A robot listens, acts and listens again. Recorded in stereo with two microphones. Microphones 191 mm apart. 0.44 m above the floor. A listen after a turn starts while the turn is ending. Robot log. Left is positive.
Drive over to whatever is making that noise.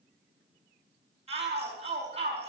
note: The shout: about 30° right or 150° right.
cmd yaw -30
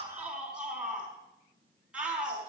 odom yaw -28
cmd fwd 1.0
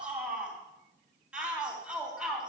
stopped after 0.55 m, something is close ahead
end: Something is in my way. I am facing the shout but have not reached it.